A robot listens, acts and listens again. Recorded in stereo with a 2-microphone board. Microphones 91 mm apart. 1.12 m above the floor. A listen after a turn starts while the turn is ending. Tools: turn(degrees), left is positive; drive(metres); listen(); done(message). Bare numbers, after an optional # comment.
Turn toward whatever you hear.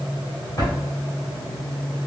# The drawer: about 45° left or 135° left.
turn(45)
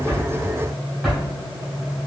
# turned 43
done("Facing the drawer.")